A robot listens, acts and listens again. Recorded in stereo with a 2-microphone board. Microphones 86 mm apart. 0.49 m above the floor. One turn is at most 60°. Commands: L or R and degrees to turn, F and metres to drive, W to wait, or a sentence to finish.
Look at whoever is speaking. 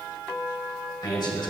L60
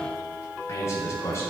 L35
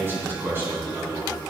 R30
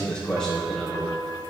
Facing the man speaking.